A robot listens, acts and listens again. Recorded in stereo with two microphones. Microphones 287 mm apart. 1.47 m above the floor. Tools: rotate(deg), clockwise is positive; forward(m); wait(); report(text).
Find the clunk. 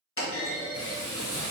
rotate(-45)
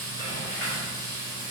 wait()
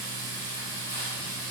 report("I heard a clunk, but can't make it out now. It was about straight ahead or 90° left.")